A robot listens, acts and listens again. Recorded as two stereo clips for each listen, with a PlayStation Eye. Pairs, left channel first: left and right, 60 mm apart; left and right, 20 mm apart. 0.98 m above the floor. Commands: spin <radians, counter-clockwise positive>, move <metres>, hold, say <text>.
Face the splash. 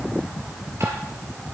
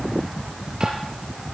hold
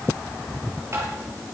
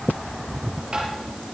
hold
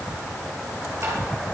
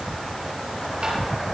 say I can't make out a splash to turn to.